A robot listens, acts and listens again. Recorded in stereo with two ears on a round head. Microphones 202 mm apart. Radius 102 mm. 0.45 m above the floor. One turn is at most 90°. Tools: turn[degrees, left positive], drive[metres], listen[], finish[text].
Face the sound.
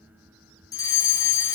Thought: The fire alarm: about 15° left or 165° left.
Action: turn[15]
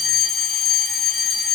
Action: finish[Facing the fire alarm, 2 to 4 m away.]